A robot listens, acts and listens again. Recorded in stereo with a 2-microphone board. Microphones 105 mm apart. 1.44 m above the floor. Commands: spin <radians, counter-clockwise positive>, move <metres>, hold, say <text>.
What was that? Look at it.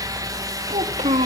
spin -1.57
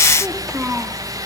spin -0.26
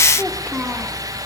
spin -0.17
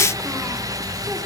hold
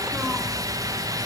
hold
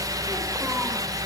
say Facing where the child speaking came from. I can't hear it now.